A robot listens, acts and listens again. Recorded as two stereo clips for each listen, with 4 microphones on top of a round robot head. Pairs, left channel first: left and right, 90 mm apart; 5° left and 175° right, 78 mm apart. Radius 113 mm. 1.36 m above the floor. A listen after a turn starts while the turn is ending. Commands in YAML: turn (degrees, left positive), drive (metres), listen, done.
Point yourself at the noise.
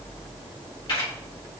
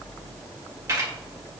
turn: 130
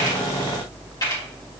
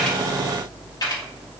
turn: 45
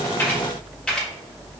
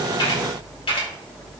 turn: 10
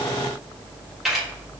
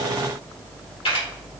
done: "Found it: a camera shutter, straight ahead, 2 to 4 m away."